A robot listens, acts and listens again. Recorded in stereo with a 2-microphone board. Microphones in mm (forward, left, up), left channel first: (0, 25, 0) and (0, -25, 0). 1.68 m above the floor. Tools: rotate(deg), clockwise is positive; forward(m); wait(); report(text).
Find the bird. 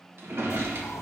rotate(-70)
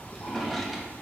rotate(-40)
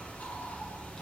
rotate(-30)
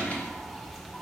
report("Found it: a bird, straight ahead, 1 to 2 m away.")